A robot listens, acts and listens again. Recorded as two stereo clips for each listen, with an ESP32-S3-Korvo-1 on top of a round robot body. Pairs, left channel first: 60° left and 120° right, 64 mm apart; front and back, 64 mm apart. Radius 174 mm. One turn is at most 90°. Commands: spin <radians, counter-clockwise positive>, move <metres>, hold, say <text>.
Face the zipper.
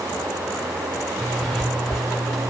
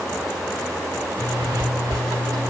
spin 1.57
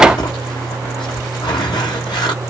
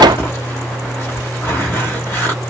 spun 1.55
spin 1.05
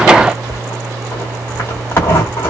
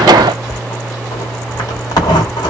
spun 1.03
say Facing the zipper, 1 to 2 m away.